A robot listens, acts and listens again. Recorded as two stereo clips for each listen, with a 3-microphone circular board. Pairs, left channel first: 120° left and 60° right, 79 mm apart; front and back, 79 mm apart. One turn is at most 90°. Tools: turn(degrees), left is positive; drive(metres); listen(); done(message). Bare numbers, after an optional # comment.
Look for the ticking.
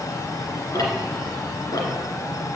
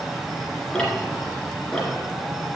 # The ticking: 80° left.
turn(80)
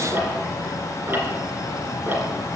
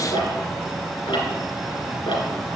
done("Facing the ticking, 2 to 4 m away.")